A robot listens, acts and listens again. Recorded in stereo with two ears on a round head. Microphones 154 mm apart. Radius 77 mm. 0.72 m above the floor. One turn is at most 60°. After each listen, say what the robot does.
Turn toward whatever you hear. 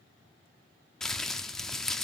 Turn 30° left.
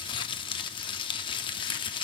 Turn 60° left.
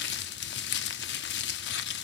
Turn 60° left.
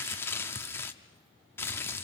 Turn 15° left.
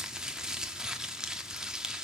Facing the crumpling.